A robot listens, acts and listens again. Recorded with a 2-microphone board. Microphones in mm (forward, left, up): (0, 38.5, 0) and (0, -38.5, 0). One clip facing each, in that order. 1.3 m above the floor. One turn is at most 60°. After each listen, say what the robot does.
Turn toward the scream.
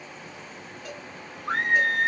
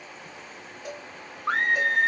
Turn 60° right.
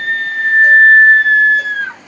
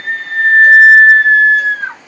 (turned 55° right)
Turn 30° right.
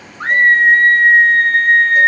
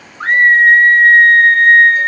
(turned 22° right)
Found it: a scream, straight ahead.